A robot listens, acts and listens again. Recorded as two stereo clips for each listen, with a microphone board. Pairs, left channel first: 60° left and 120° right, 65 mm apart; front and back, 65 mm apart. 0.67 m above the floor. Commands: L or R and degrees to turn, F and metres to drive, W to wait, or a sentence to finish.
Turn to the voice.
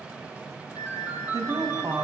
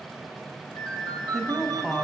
R90
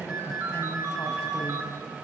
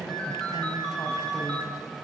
W
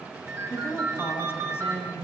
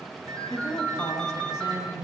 L10
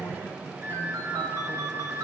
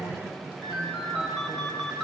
W
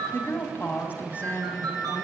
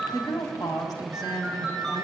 Facing the woman speaking.